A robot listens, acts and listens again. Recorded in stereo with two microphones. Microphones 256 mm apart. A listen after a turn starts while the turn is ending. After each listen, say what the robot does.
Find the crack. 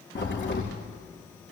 Turn 45° left.
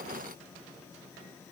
Keep listening.
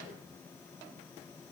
I heard a crack, but can't make it out now. It was about straight ahead or 90° left.